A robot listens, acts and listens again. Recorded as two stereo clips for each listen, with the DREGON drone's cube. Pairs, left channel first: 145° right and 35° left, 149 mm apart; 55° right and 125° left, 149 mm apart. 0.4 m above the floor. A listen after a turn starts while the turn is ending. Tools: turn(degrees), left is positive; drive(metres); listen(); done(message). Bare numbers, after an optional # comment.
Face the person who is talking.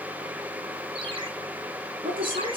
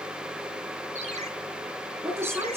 # The woman speaking: 50° left.
turn(50)
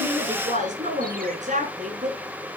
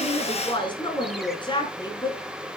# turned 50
done("Found it: a woman speaking, straight ahead, over 4 m away.")